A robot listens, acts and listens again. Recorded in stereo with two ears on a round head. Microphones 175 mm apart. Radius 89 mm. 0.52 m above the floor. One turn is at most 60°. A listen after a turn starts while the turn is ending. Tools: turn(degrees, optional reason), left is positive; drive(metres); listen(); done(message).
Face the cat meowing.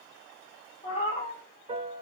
turn(degrees=35, reason="The cat meowing: about 35° left or 145° left.")
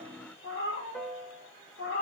turn(degrees=60, reason="So it is at 115° left.")
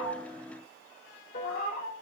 turn(degrees=55, reason="The cat meowing is now 55° left.")
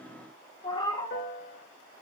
turn(degrees=25, reason="The cat meowing is now 25° left.")
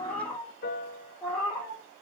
done("Found it: a cat meowing, straight ahead, 2 to 4 m away.")